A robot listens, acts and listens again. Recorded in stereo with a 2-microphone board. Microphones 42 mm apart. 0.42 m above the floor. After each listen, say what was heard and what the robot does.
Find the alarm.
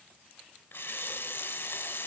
Keep listening.
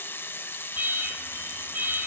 The alarm: about 45° right or 135° right. Turn 45° right.
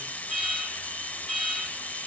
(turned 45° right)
Found it: an alarm, straight ahead, over 4 m away.